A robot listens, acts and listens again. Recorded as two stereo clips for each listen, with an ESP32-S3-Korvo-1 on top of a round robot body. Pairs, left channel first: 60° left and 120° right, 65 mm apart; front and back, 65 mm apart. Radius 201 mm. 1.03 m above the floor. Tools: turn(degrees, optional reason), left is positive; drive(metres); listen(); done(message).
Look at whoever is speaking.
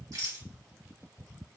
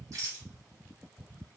listen()
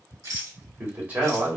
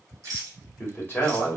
turn(degrees=-60, reason="The man speaking: 60° right.")
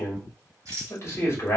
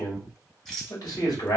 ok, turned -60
turn(degrees=10, reason="The man speaking is now 10° left.")
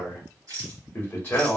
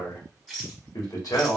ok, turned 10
done("Facing the man speaking, 1 to 2 m away.")